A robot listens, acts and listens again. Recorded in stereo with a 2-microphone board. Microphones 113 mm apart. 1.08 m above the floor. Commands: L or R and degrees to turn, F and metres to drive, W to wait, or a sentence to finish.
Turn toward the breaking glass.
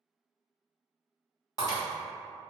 L35
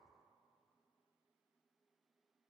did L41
W
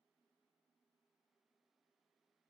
I heard breaking glass, but can't make it out now. It was about 5° right or 100° left.